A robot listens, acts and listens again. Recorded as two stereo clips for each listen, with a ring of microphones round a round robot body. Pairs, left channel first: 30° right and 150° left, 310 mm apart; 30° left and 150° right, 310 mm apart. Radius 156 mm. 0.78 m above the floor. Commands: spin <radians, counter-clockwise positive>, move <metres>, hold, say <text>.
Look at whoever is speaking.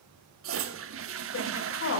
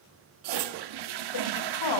spin 0.44
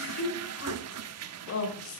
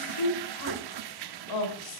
spin 0.26
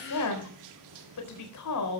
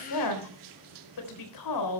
say Facing the woman speaking, 2 to 4 m away.